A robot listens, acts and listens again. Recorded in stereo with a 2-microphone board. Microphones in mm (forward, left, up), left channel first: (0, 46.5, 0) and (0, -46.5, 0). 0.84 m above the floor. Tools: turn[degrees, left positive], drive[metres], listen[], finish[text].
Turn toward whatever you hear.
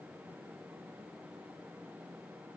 Action: listen[]
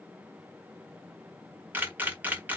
Thought: The camera shutter: about 20° right or 160° right.
Action: turn[-20]
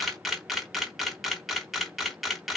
Action: finish[Facing the camera shutter.]